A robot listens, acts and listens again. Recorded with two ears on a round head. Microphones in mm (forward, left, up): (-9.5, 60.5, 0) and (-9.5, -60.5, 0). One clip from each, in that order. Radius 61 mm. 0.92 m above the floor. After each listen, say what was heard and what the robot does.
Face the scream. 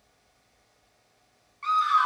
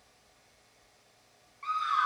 The scream: about 35° left or 145° left. Turn 35° left.
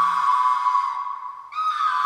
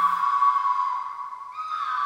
So it is at 110° left. Turn 110° left.
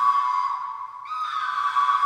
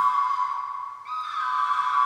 Facing the scream.